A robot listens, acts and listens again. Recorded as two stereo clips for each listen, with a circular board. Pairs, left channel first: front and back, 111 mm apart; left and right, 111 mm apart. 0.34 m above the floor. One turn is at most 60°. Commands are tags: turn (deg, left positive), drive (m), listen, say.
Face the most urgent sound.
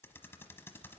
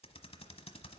<listen/>
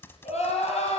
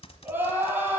<turn deg="-15"/>
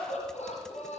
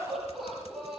<say>Found it: crying, straight ahead.</say>